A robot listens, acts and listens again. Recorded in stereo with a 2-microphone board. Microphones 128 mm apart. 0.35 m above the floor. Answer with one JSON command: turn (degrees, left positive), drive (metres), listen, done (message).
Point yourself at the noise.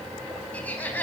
{"turn": 30}
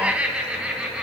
{"turn": -10}
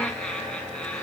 {"turn": 10}
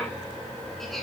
{"listen": true}
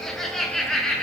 {"done": "Found it: laughter, straight ahead."}